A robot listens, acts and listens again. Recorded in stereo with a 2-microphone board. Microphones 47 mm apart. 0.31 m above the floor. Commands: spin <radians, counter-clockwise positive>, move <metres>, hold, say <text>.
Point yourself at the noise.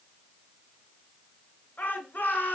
spin 0.79
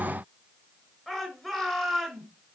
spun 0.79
say Facing the shout, over 4 m away.